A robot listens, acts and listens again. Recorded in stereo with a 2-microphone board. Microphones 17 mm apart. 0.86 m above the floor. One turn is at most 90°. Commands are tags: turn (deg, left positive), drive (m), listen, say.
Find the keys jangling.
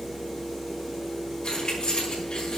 <turn deg="65"/>
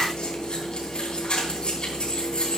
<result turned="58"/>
<turn deg="55"/>
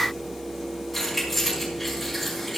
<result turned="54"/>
<say>Facing the keys jangling.</say>